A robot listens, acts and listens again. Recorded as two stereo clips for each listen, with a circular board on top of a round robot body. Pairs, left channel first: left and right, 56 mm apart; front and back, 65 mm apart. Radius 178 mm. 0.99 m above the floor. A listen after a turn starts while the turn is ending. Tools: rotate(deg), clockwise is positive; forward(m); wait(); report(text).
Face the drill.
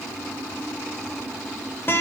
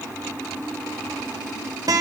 wait()
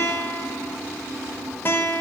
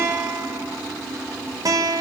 wait()
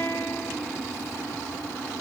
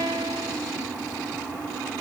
report("I can't make out a drill to turn to.")